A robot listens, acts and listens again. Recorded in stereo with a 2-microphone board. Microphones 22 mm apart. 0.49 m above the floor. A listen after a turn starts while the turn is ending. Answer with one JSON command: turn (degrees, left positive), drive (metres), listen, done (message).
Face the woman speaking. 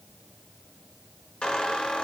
{"listen": true}
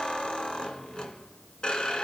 {"listen": true}
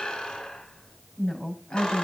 {"turn": 60}
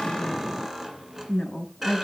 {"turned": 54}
{"turn": 55}
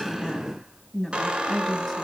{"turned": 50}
{"done": "Facing the woman speaking, over 4 m away."}